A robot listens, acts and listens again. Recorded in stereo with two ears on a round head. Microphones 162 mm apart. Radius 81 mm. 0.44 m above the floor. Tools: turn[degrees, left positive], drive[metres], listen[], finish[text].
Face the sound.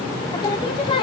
Thought: The singing: about 30° left or 150° left.
Action: turn[30]
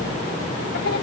Action: listen[]
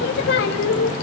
Thought: So it is at 110° left.
Action: turn[110]
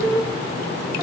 Action: finish[Found it: singing, straight ahead, 1 to 2 m away.]